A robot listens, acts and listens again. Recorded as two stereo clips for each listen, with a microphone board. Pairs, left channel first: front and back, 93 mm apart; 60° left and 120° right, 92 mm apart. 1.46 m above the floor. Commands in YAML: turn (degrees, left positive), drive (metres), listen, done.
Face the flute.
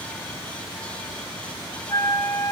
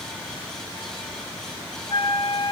turn: 45
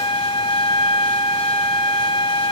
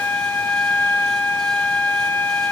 turn: -10
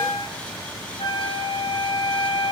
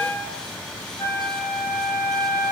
done: "Facing the flute."